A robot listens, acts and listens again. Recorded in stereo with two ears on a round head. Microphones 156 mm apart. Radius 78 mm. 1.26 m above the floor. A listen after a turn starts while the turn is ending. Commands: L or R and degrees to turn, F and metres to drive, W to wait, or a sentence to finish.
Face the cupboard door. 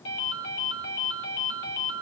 W
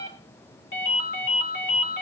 W
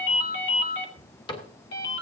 L25
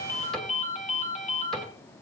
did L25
W
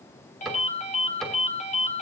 Facing the cupboard door, 2 to 4 m away.